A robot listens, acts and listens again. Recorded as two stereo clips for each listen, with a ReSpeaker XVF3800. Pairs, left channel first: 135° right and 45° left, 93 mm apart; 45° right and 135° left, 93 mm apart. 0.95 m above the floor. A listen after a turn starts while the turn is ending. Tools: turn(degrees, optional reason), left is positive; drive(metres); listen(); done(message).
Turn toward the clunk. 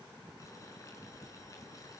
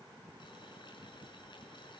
listen()
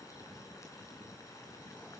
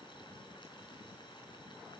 listen()
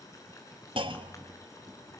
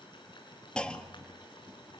turn(degrees=35, reason="The clunk: 35° left.")
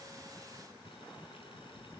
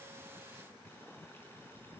done("Facing where the clunk came from. I can't hear it now.")